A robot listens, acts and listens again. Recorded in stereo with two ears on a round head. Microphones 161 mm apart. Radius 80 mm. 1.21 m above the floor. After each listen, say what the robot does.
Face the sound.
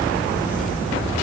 Keep listening.
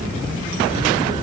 Keep listening.
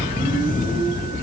I can't make out anything to turn to.